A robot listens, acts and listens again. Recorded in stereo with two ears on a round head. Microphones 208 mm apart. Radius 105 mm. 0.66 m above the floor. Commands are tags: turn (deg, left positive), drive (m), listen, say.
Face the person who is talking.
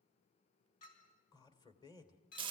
<turn deg="20"/>
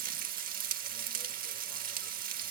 <listen/>
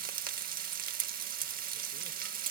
<listen/>
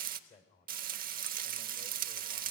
<turn deg="140"/>
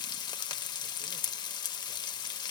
<listen/>
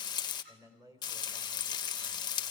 <turn deg="-15"/>
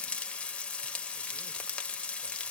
<listen/>
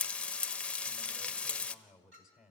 <say>Facing the man speaking.</say>